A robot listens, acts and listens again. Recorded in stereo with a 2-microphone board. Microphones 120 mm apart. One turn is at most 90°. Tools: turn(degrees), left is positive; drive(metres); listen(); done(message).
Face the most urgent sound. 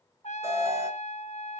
turn(degrees=-20)
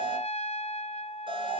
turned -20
turn(degrees=-90)
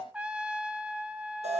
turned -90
turn(degrees=-65)
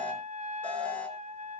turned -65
turn(degrees=10)
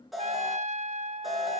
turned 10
done("Facing the alarm.")